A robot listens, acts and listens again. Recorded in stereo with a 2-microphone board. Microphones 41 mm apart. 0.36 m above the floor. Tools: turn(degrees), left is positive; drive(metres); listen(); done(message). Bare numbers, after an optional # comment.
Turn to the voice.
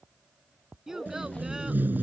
turn(-30)
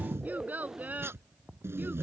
# So it is at 140° right.
turn(-140)
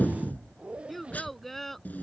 done("Found it: a child speaking, straight ahead.")